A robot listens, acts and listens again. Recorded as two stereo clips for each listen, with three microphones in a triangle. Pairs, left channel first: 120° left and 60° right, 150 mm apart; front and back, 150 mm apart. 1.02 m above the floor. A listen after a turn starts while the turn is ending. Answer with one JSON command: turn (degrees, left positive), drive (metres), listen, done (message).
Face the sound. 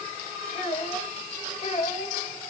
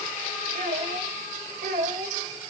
{"turn": 165}
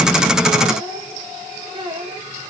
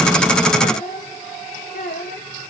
{"done": "Facing the child speaking."}